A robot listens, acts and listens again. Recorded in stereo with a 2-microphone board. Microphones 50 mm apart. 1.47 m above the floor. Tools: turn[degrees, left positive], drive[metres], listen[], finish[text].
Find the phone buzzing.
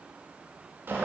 Action: listen[]
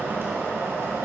Action: listen[]
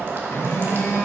Thought: The phone buzzing: about 70° left or 110° left.
Action: turn[70]
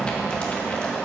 Action: listen[]
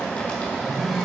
Action: finish[Facing the phone buzzing, 2 to 4 m away.]